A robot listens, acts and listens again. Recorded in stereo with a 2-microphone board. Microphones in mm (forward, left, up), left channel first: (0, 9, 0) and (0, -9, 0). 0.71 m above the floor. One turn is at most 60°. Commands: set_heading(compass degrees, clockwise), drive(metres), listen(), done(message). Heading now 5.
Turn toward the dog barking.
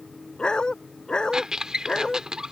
set_heading(310)
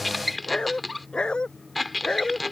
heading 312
set_heading(252)
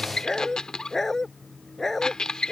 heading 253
set_heading(223)
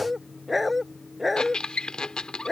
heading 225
done("Facing the dog barking.")